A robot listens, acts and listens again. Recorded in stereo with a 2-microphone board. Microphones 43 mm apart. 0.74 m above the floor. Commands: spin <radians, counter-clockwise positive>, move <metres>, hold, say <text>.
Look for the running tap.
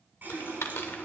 spin -0.96
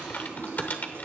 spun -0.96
spin -1.22
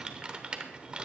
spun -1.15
hold
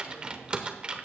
hold
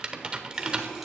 say Facing the running tap, over 4 m away.